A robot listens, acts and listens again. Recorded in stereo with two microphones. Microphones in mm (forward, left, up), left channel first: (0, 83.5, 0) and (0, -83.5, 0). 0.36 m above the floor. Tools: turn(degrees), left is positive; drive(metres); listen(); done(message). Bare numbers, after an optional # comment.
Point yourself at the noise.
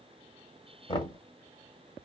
# The knocking: about 30° left or 150° left.
turn(30)
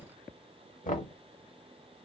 # So it is at 110° left.
turn(110)
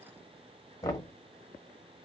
# The knocking is now 25° left.
turn(25)
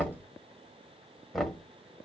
done("Found it: knocking, straight ahead.")